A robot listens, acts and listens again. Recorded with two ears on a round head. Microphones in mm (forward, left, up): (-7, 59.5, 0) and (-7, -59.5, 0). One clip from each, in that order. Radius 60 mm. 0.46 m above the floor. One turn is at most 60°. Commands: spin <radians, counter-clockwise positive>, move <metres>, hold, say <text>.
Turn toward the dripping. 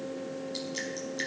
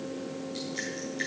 hold
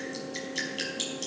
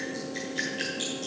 spin 1.05
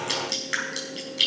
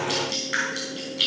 spin 0.61
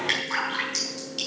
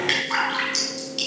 say Found it: dripping, straight ahead.